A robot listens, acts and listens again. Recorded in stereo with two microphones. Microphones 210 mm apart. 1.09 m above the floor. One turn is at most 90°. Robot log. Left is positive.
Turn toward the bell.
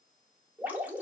cmd idle
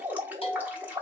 note: The bell: about 25° left or 155° left.
cmd yaw +25
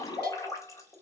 cmd idle
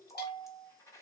note: So it is at 130° left.
cmd yaw +90
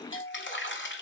note: The bell is now 70° left.
cmd yaw +70
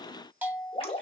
note: The bell is now 10° right.
cmd yaw -10
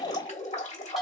end: Facing the bell, 1 to 2 m away.